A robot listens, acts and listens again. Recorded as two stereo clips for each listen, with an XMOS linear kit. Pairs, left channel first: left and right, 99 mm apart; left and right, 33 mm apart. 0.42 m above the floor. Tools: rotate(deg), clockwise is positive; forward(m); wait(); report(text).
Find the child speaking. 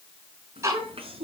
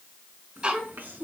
rotate(70)
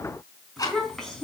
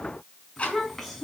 report("Facing the child speaking.")